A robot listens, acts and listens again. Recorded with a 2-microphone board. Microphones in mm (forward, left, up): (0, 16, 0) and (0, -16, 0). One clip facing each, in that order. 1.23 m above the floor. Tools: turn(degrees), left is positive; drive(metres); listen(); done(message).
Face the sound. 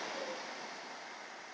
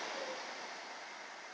listen()
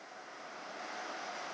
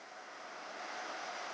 listen()
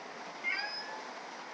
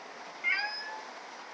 turn(degrees=-20)
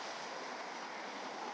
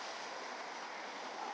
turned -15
listen()
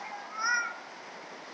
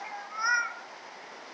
done("Facing the cat meowing, under 1 m away.")